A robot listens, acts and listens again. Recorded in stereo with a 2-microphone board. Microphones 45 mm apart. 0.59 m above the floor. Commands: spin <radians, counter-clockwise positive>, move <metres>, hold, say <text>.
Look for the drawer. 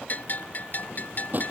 spin -0.70
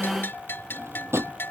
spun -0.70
spin -1.75
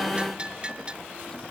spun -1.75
hold
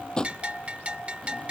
spin 0.26
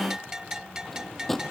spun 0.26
say Found it: a drawer, straight ahead.